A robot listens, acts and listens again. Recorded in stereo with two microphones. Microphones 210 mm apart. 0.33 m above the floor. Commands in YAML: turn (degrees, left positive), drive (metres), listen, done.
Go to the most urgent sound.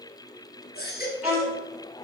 turn: 55
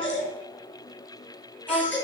turn: 70
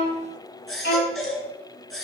drive: 1.0
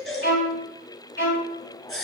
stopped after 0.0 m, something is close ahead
done: "Blocked. The baby crying is further on, straight ahead."